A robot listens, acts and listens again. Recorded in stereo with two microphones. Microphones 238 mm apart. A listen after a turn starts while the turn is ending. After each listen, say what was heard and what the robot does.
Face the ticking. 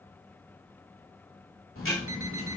The ticking: about 65° left or 115° left. Turn 65° left.
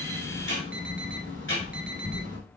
So it is at 55° left. Turn 55° left.
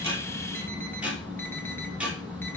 Facing the ticking.